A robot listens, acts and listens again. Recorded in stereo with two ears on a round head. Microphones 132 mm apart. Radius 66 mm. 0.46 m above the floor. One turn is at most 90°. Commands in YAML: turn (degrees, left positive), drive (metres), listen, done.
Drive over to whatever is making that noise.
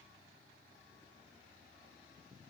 listen: true
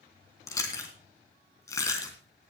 turn: 20
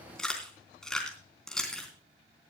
drive: 1.0
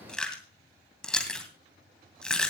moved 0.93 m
drive: 1.0
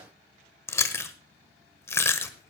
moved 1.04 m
turn: 20
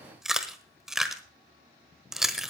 drive: 1.0
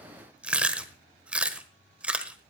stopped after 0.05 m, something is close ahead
turn: -10
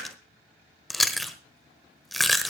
done: "I am next to the chewing."